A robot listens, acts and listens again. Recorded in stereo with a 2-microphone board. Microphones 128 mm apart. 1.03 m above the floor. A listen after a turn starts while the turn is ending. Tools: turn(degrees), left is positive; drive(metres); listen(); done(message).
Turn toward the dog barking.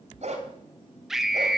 turn(degrees=-60)
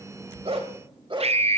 turn(degrees=-40)
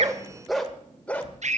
turn(degrees=15)
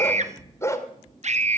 turn(degrees=25)
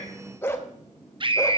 turn(degrees=20)
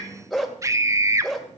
done("Facing the dog barking, 1 to 2 m away.")